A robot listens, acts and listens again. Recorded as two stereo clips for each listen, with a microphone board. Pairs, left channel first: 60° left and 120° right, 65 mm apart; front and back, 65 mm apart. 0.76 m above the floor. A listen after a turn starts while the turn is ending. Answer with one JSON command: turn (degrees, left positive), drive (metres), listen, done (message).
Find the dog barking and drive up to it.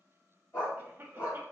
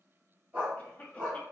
{"turn": 110}
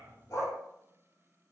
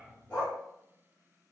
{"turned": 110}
{"listen": true}
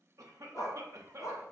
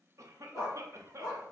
{"turn": 30}
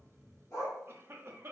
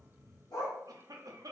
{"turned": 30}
{"turn": 10}
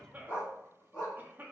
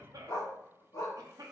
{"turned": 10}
{"drive": 1.0}
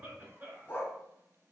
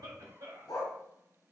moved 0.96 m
{"drive": 1.0}
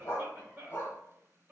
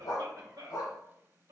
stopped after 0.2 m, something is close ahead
{"done": "I am next to the dog barking."}